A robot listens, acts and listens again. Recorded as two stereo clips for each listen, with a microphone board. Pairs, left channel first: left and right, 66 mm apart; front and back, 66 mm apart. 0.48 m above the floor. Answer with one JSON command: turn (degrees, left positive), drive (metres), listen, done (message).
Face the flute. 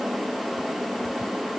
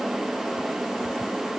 {"listen": true}
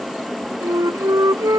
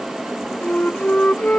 {"turn": -65}
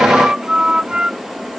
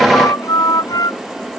{"turn": -15}
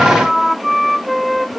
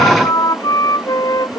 {"done": "Facing the flute."}